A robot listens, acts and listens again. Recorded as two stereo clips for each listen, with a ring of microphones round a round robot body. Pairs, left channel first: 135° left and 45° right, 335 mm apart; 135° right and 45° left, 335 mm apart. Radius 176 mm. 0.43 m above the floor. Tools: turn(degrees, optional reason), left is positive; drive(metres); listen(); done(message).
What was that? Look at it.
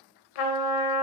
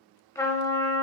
turn(degrees=145, reason="The trumpet: 145° left.")
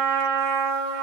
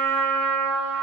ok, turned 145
done("Found it: a trumpet, straight ahead, under 1 m away.")